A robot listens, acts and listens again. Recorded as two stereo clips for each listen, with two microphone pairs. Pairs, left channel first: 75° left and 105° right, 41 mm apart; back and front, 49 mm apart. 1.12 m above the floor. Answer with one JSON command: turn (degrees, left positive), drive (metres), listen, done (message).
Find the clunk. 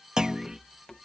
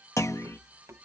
{"turn": 180}
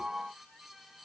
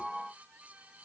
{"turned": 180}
{"done": "Facing where the clunk came from. I can't hear it now."}